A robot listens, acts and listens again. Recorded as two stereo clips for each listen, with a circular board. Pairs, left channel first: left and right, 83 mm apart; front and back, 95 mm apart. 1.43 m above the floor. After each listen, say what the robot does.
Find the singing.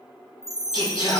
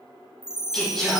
Turn 85° left.
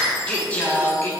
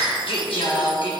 Turn 25° left.
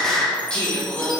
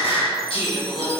Turn 20° left.
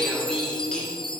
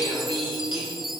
Turn 10° left.
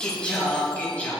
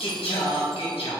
Turn 15° left.
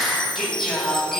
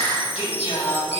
Facing the singing, 2 to 4 m away.